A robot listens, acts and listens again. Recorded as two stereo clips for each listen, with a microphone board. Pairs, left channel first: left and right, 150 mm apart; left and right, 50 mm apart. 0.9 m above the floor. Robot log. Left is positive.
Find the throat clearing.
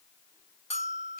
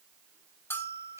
cmd idle
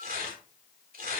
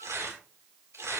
cmd idle
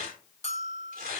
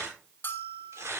end: I can't make out throat clearing, only tearing paper and a bell.